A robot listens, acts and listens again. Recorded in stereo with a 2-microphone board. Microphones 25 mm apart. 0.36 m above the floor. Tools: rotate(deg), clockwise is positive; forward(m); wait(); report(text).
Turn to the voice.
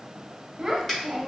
rotate(20)
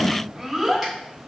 rotate(10)
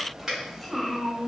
report("Facing the child speaking.")